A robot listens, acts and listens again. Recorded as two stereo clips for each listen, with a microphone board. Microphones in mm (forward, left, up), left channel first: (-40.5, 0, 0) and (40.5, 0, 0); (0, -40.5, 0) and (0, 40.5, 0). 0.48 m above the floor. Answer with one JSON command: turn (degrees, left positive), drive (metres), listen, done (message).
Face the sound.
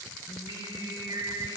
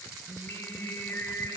{"turn": -30}
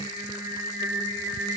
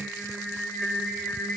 {"done": "Found it: singing, straight ahead, 1 to 2 m away."}